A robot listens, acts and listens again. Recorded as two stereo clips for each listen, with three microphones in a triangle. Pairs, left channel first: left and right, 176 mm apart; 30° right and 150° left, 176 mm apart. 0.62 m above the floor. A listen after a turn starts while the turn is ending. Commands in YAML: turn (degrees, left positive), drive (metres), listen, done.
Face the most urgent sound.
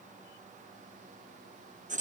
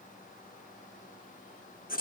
listen: true
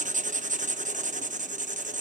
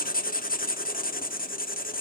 listen: true
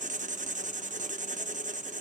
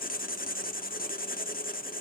done: "I can't make out anything urgent to turn to."